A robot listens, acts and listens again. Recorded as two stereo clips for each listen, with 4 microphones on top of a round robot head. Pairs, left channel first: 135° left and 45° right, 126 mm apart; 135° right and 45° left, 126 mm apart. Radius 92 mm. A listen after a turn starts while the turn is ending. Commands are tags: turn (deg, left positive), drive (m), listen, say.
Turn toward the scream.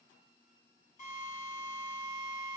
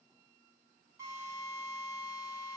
<listen/>
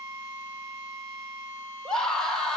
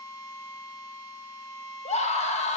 <turn deg="-140"/>
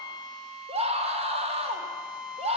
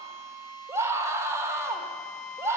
<turn deg="-20"/>
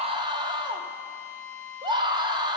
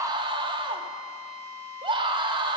<say>Facing the scream.</say>